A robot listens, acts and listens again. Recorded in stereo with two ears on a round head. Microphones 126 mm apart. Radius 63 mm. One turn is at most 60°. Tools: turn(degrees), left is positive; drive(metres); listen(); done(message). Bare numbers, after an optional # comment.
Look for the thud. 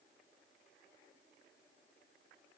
listen()
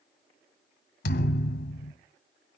# The thud: about 65° left or 115° left.
turn(60)
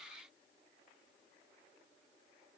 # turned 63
listen()
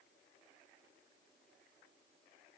done("I heard a thud, but can't make it out now. It was about 5° left or 50° left.")